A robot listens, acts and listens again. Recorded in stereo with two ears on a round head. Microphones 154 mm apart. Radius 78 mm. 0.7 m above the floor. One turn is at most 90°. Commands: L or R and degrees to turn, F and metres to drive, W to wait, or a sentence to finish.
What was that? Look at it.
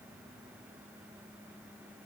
W
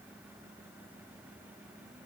W
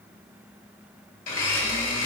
L55
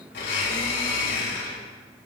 L70
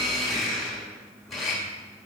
Found it: a blender, straight ahead, 2 to 4 m away.